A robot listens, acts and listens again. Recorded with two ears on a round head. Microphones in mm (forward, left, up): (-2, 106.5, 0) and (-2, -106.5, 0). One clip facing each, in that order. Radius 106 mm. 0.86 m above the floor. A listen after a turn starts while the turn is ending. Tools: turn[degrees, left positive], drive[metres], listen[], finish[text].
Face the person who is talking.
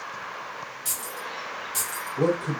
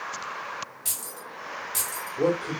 Thought: The man speaking: about 60° left or 120° left.
Action: turn[60]
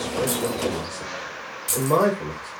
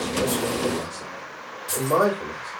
Thought: So it is at 45° left.
Action: turn[45]
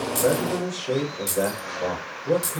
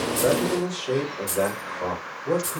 Action: finish[Found it: a man speaking, straight ahead, 1 to 2 m away.]